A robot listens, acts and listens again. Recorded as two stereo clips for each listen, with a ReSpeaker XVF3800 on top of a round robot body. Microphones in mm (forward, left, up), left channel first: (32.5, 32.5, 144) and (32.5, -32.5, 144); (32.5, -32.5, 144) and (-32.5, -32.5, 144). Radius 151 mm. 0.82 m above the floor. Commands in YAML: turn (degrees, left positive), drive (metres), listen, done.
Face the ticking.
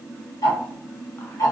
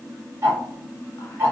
turn: 125
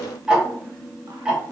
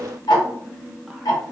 turn: -10
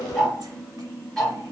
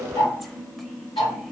done: "Facing the ticking."